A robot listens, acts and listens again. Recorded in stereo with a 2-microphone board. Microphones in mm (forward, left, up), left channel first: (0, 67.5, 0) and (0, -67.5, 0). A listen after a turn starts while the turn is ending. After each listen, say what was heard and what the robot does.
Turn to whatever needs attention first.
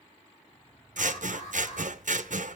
The alarm: about 55° left or 125° left. Turn 55° left.
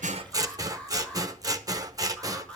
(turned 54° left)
So it is at 10° left. Turn 10° left.
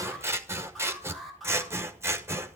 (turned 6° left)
Facing the alarm.